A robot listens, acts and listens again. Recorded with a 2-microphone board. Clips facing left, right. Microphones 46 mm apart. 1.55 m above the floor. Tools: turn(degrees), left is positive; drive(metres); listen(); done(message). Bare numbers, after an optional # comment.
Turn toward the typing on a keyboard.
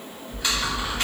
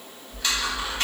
turn(30)
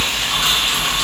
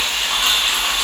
# So it is at 15° right.
turn(-15)
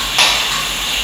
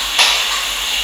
done("Facing the typing on a keyboard, under 1 m away.")